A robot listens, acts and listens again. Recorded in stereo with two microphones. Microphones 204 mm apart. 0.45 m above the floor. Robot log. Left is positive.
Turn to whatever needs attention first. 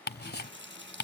cmd idle
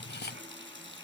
cmd idle
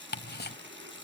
end: I can't make out anything urgent, only a running tap and ticking.